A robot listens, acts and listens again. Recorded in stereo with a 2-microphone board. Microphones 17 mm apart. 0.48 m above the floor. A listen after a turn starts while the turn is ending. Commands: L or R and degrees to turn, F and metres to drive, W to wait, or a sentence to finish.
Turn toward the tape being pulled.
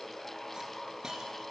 W
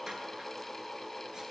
W
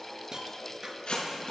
L55
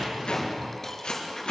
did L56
L65
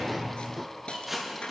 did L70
Facing the tape being pulled.